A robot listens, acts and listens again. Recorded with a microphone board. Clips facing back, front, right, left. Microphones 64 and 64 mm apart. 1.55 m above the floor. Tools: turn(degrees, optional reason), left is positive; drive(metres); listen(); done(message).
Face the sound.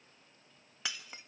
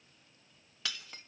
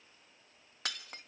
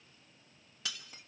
turn(degrees=-115, reason="The breaking glass: 115° right.")
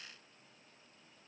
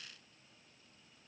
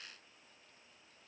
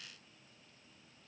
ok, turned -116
done("I heard breaking glass from this way, but can't make it out now.")